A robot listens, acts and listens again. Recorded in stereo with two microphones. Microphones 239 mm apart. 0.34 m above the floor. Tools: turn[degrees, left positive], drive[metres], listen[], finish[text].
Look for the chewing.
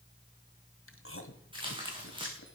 Thought: The chewing: about 60° left or 120° left.
Action: turn[60]
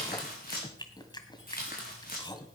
Thought: So it is at 20° left.
Action: turn[20]
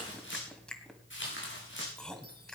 Action: finish[Found it: chewing, straight ahead, 1 to 2 m away.]